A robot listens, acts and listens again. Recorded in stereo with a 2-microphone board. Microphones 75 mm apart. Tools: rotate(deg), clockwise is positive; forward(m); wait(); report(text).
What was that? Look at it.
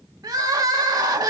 rotate(55)
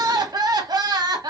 rotate(65)
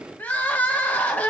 rotate(-25)
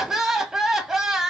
report("Found it: crying, straight ahead, 1 to 2 m away.")